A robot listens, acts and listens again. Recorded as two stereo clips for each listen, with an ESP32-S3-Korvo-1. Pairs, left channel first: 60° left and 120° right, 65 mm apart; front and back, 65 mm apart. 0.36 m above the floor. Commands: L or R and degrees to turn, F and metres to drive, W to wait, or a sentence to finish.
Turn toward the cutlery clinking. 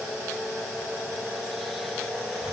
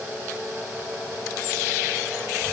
W
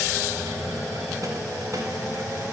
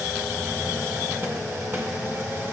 W
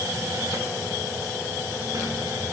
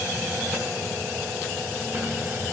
I can't make out cutlery clinking to turn to.